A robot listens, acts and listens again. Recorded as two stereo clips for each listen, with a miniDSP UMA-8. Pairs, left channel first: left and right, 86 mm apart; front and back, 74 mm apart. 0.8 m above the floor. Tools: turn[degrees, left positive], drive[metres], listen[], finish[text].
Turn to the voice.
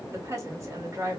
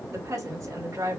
Thought: The woman speaking: 140° right.
Action: turn[-140]
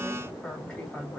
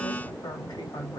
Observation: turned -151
Thought: The woman speaking is now 10° left.
Action: turn[10]
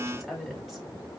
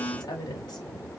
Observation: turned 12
Action: finish[Facing the woman speaking.]